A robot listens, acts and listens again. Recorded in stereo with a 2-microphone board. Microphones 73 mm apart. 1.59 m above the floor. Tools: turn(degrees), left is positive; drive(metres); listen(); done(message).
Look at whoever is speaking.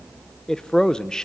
turn(degrees=30)
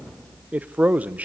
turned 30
turn(degrees=-20)
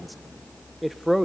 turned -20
done("Facing the man speaking.")